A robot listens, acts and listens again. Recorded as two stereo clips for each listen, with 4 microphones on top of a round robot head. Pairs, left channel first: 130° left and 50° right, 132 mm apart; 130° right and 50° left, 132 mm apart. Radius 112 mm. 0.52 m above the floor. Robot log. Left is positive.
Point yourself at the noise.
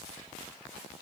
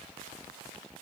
cmd idle
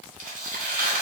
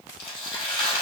note: The tearing paper: 80° right.
cmd yaw -80
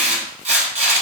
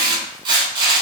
note: The tearing paper is now 10° right.
cmd yaw -10
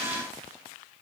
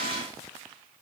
cmd idle
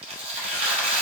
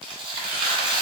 end: Facing the tearing paper, under 1 m away.